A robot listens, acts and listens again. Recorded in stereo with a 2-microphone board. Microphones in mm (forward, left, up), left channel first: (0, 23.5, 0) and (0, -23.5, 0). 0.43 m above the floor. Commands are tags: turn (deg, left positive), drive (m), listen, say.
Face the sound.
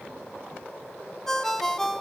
<turn deg="30"/>
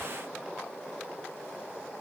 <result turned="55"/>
<listen/>
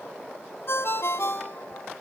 <turn deg="115"/>
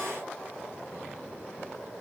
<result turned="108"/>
<turn deg="10"/>
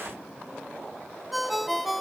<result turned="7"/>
<say>Facing the ringtone.</say>